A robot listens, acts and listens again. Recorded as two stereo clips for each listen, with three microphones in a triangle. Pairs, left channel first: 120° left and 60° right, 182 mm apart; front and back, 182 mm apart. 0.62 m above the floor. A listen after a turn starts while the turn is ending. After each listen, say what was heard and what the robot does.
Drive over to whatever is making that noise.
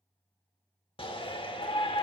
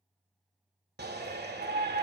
The shout: 175° left. Turn 175° left.
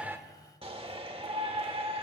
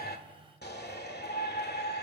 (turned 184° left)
Drive 1.0 m forward.
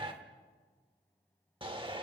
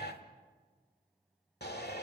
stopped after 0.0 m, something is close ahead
Blocked. The shout is further on, straight ahead.